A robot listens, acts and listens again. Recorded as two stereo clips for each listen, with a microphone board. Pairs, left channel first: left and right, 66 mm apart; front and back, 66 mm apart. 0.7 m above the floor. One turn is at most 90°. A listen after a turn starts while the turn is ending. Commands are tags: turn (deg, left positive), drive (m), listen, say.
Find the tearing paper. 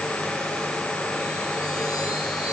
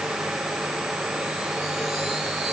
<listen/>
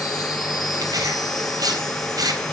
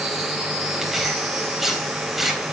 <turn deg="-90"/>
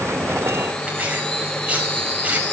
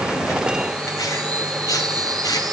<listen/>
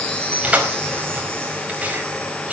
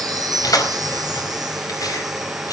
<turn deg="-20"/>
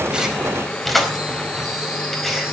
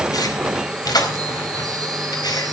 <say>Facing the tearing paper.</say>